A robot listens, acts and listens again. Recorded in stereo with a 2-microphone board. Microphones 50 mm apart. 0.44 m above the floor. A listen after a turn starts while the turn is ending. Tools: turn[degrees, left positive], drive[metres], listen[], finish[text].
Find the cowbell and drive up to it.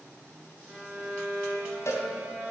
Thought: The cowbell: about 65° left or 115° left.
Action: turn[65]
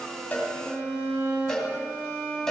Thought: So it is at 10° left.
Action: turn[10]
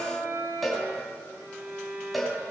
Action: drive[1.0]
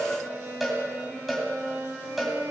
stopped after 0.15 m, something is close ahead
Action: finish[Blocked. The cowbell is further on, straight ahead.]